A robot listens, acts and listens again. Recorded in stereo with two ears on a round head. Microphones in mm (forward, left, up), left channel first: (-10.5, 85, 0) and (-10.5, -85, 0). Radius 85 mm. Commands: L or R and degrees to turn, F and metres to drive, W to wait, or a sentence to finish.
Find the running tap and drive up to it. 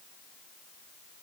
W
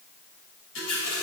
L90
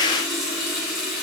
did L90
F1.0
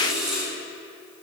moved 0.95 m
F1.0
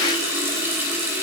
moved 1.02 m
R15
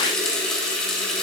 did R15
F1.0
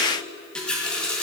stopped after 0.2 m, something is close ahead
Arrived at the running tap, straight ahead.